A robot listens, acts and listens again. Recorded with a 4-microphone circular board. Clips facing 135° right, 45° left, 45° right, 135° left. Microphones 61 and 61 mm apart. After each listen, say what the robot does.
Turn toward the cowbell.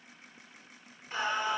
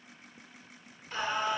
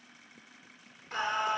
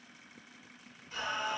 Keep listening.
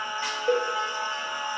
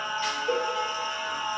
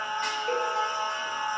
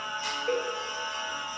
Turn 145° right.
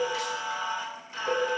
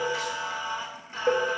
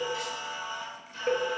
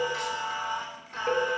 Turn 30° left.
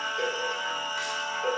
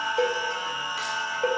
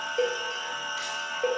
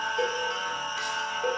Facing the cowbell, 1 to 2 m away.